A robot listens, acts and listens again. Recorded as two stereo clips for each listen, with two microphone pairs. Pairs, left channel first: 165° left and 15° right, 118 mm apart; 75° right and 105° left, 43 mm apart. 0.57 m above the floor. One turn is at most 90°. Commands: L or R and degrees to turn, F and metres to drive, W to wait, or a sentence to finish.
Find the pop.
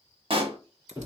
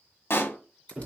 R55
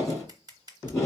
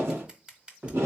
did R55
Facing where the pop came from. I can't hear it now.